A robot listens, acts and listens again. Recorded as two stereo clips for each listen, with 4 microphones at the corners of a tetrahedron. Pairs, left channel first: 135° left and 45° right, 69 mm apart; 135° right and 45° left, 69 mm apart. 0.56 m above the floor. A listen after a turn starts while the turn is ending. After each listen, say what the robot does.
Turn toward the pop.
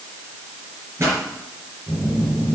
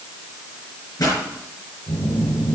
Turn 95° right.
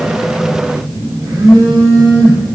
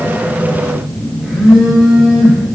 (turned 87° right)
Turn 10° right.
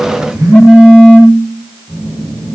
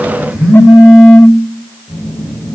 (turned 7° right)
I heard a pop from this way, but can't make it out now.